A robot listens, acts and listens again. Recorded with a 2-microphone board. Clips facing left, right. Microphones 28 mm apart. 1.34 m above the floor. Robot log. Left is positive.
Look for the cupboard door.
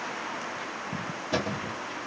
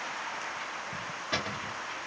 note: The cupboard door: about 30° right or 150° right.
cmd yaw -30
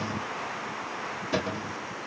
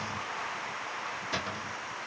end: Found it: a cupboard door, straight ahead, 2 to 4 m away.